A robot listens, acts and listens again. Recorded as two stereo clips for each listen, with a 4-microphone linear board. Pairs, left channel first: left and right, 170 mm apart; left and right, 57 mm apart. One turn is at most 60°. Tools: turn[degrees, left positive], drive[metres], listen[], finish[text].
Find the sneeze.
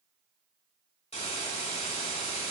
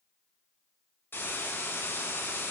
Action: listen[]
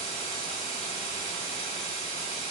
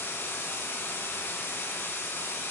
Action: listen[]
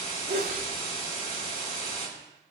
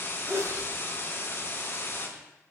Action: turn[-60]
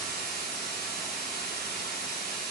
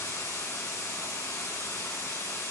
Thought: Nothing new. It was at 30° right.
Action: turn[-30]
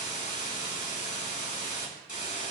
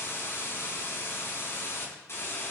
Action: finish[I heard a sneeze from this way, but can't make it out now.]